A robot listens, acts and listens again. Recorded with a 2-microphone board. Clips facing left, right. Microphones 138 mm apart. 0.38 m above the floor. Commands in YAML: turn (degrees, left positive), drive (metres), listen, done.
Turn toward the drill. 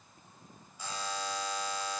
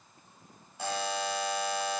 listen: true
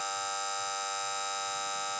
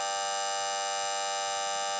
listen: true
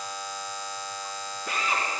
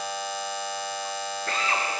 turn: 30
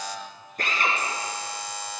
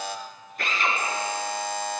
turn: 140
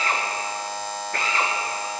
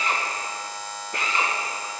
turn: -20
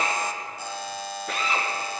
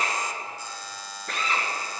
done: "Facing the drill."